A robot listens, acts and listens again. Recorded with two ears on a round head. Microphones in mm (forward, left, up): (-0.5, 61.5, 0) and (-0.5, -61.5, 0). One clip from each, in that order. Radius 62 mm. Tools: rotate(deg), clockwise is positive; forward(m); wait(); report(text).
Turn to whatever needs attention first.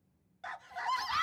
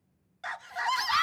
rotate(40)
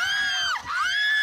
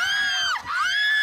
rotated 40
report("Facing the scream.")